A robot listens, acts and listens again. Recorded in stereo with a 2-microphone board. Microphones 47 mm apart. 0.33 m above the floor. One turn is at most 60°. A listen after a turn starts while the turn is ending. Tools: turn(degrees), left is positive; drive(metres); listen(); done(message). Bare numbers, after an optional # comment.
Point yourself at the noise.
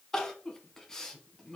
turn(30)
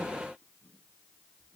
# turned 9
listen()
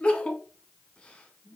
# The crying: about 25° left or 155° left.
turn(25)
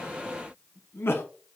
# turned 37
# So it is at 120° left.
turn(60)
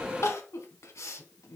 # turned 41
# The crying is now 80° left.
turn(60)
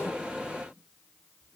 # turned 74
listen()
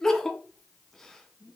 # The crying is now 10° left.
turn(10)
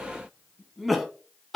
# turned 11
done("Facing the crying, under 1 m away.")